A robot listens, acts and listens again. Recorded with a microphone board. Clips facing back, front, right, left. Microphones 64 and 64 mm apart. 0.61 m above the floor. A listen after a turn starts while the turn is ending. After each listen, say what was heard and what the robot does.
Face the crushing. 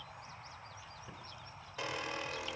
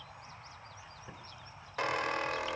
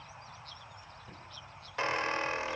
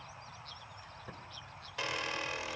Keep listening.
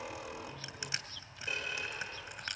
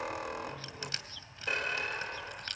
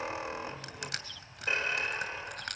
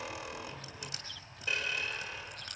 The crushing: 105° right. Turn 105° right.
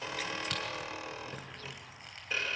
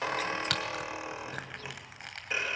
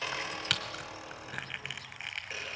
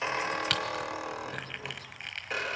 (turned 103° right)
Facing the crushing, 1 to 2 m away.